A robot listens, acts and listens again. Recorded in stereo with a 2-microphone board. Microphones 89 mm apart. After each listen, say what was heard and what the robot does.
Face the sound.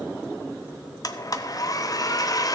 The blender: about 45° left or 135° left. Turn 45° left.
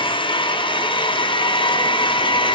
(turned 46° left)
So it is at 90° left. Turn 90° left.
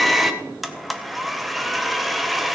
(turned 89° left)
Facing the blender, under 1 m away.